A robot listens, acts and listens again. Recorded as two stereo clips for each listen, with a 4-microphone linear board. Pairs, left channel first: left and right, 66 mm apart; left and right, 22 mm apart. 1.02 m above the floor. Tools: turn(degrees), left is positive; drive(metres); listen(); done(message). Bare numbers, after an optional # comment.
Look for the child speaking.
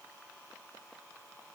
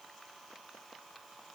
listen()
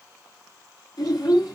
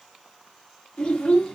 turn(90)
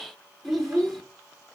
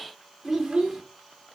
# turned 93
done("Found it: a child speaking, straight ahead.")